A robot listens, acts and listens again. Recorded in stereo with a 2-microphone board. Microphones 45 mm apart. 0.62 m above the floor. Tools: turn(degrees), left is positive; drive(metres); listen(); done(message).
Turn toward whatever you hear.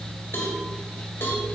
turn(degrees=75)
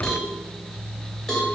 turn(degrees=10)
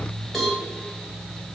done("Found it: a cowbell, straight ahead.")